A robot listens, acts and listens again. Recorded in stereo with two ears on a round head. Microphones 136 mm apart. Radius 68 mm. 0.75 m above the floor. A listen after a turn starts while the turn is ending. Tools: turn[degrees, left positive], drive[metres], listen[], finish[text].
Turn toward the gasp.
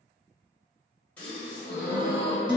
Action: turn[30]
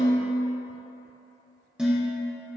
Action: listen[]
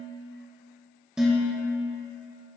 Action: finish[I heard a gasp, but can't make it out now. It was about 20° right or 140° left.]